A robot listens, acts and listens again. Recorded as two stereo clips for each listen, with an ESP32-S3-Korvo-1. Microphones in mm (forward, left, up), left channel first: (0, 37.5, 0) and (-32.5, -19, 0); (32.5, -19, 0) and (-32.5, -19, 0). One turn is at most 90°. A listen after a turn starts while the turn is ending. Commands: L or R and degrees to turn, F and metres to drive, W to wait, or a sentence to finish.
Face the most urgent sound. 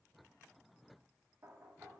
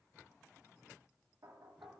W
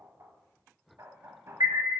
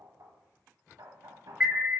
R90
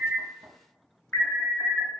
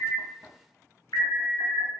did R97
Found it: an alarm, straight ahead, 1 to 2 m away.